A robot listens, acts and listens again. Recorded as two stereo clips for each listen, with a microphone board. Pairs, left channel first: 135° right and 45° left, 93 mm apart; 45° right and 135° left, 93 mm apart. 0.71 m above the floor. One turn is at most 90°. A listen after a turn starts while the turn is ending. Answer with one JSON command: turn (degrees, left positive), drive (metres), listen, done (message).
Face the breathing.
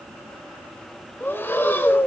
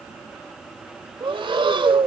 {"turn": 90}
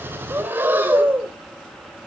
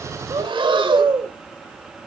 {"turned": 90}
{"turn": 90}
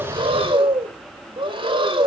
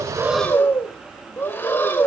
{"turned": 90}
{"turn": 25}
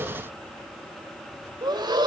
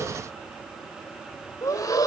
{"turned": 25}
{"done": "Facing the breathing."}